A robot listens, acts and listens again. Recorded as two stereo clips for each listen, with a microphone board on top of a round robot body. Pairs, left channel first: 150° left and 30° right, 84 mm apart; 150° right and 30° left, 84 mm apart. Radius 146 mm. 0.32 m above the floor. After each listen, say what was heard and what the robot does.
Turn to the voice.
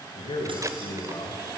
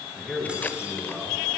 The man speaking: 120° left. Turn 120° left.
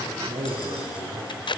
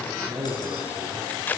The man speaking is now 10° right. Turn 10° right.
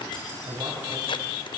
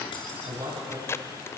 Found it: a man speaking, straight ahead, 2 to 4 m away.